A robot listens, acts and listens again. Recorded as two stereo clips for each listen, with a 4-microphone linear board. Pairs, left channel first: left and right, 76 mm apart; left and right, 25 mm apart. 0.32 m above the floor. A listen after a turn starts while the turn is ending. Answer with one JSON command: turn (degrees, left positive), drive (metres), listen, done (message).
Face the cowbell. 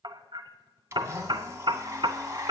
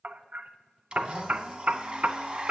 {"listen": true}
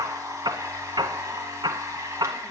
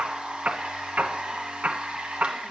{"listen": true}
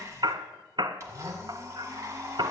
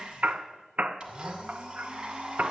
{"done": "I can't make out a cowbell, only hammering and a blender."}